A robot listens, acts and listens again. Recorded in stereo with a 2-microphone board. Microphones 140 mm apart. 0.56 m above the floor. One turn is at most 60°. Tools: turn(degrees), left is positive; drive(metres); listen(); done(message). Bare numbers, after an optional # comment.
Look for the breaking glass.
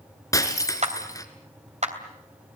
# The breaking glass: about 25° left or 155° left.
turn(25)
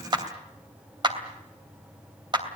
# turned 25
listen()
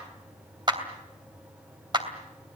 done("I heard breaking glass, but can't make it out now. It was about straight ahead or 130° left.")